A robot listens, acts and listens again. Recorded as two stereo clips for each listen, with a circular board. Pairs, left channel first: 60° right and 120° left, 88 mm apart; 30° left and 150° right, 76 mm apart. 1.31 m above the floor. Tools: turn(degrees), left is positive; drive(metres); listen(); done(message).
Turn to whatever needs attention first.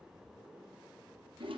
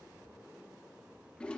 listen()
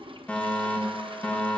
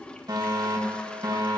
turn(degrees=-135)
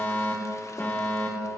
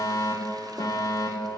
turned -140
done("Found it: a fire alarm, straight ahead, 2 to 4 m away.")